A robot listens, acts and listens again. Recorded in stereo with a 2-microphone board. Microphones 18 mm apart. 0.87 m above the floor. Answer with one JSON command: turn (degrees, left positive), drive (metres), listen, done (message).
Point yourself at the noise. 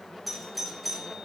{"turn": -30}
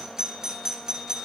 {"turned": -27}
{"turn": -145}
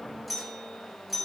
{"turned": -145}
{"done": "Found it: a doorbell, straight ahead."}